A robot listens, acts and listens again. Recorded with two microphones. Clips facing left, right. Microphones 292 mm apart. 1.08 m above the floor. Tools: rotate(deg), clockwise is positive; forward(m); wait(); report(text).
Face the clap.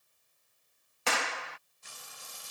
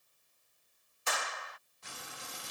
rotate(-90)
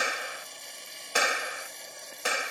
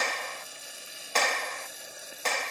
rotate(-10)
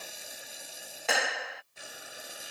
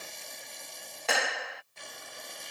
report("Facing the clap.")